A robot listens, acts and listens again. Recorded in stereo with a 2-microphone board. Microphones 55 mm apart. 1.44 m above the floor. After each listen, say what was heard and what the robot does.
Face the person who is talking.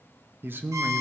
The man speaking: about 40° right or 140° right. Turn 40° right.
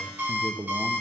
So it is at 100° right. Turn 100° right.
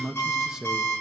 The man speaking is now 10° right. Turn 10° right.
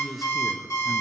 Facing the man speaking, 1 to 2 m away.